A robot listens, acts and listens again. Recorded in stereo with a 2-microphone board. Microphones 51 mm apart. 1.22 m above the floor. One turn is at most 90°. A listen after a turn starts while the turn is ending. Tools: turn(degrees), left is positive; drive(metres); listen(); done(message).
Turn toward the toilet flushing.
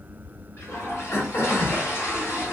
turn(degrees=45)
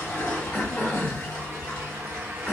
turn(degrees=90)
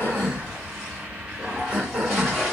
done("Found it: a toilet flushing, straight ahead, 1 to 2 m away.")